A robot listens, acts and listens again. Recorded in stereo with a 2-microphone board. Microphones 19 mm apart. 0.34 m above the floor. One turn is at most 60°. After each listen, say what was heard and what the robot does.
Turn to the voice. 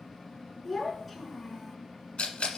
Turn 30° left.
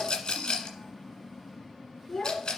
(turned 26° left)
So it is at 155° left. Turn 60° left.
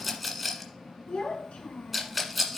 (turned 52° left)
The child speaking is now 105° left. Turn 60° left.
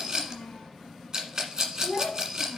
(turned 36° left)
The child speaking is now 70° left. Turn 60° left.
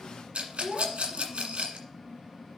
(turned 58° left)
The child speaking is now 10° left. Turn 10° left.
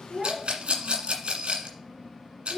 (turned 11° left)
Facing the child speaking, 2 to 4 m away.